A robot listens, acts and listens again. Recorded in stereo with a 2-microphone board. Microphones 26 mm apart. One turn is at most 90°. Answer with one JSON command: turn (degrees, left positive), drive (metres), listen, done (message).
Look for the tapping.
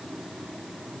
{"listen": true}
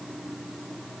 {"listen": true}
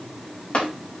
{"turn": 65}
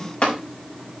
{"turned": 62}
{"turn": 55}
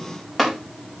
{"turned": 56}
{"done": "Found it: tapping, straight ahead, over 4 m away."}